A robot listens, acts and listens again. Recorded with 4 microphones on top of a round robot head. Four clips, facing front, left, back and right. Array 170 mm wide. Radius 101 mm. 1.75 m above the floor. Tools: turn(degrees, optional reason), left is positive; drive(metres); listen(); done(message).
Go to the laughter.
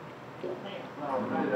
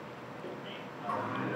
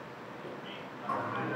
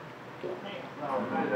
turn(degrees=-40, reason="The laughter: 40° right.")
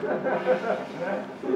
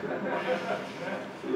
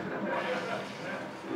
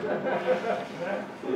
turn(degrees=-20, reason="The laughter is now 20° right.")
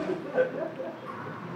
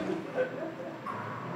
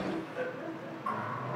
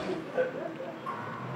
drive(metres=1.0)
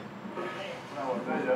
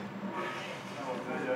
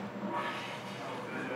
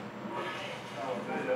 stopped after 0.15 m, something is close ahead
done("Something is in my way. I am facing the laughter but have not reached it.")